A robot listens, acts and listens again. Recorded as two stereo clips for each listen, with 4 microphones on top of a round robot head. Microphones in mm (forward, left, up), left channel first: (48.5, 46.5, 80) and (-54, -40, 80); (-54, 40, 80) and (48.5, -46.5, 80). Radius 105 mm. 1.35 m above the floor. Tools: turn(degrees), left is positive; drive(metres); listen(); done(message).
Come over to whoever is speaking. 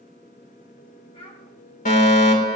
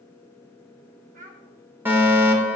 turn(degrees=-10)
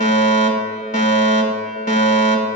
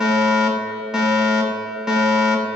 listen()
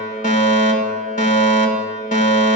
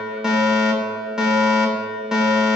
listen()
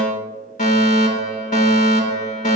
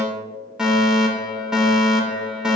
done("Facing where the child speaking came from. I can't hear it now. I did not reach it.")